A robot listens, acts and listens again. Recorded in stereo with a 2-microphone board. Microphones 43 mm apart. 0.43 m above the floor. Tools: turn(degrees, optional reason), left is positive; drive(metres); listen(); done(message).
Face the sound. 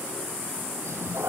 turn(degrees=-90)
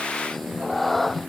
done("Facing the cat meowing.")